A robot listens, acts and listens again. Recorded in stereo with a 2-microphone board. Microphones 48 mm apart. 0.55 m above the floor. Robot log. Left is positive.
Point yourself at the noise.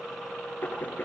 note: The knocking: about 40° left or 140° left.
cmd yaw +40
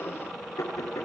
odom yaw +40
note: So it is at 100° left.
cmd yaw +100
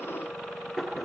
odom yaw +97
end: Found it: knocking, straight ahead, over 4 m away.